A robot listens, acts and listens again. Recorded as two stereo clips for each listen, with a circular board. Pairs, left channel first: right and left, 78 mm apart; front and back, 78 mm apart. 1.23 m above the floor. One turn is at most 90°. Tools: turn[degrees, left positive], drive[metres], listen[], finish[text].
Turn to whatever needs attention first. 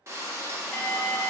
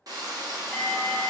Thought: The alarm: 70° right.
Action: turn[-70]
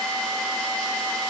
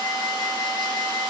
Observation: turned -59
Thought: The alarm is now 10° right.
Action: turn[-10]
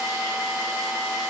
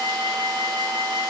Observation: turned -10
Action: finish[Facing the alarm.]